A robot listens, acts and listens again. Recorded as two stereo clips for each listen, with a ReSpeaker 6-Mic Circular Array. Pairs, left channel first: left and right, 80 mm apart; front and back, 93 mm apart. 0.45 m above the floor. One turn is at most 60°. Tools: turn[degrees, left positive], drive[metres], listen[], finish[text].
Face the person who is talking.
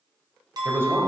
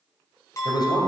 Thought: The man speaking: 35° right.
Action: turn[-35]
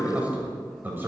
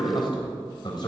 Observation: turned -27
Thought: The man speaking is now 25° right.
Action: turn[-25]
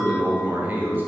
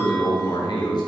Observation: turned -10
Thought: The man speaking is now 25° right.
Action: turn[-25]
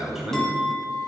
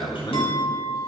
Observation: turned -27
Action: finish[Facing the man speaking, 2 to 4 m away.]